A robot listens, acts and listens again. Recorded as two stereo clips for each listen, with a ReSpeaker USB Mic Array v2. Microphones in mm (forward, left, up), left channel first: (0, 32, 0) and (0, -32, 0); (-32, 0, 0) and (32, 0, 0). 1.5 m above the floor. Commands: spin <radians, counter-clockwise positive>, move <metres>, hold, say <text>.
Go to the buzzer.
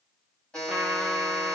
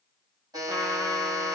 spin 0.17
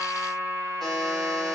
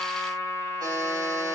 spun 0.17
move 1.0
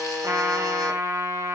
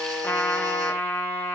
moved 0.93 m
spin 0.17
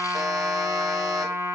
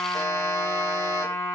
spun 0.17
hold
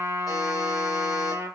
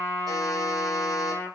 hold
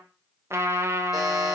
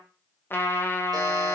say Facing where the buzzer came from. I can't hear it now. I did not reach it.